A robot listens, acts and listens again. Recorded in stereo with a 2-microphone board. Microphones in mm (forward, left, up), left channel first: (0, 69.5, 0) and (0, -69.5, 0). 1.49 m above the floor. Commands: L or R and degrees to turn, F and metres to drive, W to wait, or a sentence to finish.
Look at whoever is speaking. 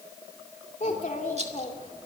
L65
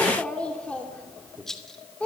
L10
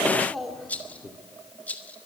Found it: a child speaking, straight ahead.